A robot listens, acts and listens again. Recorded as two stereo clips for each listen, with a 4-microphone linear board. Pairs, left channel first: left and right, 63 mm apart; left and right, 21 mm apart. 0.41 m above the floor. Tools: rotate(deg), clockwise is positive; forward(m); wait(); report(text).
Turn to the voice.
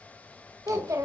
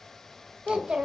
rotate(60)
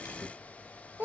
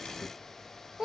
rotate(40)
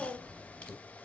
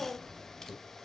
report("Facing the child speaking.")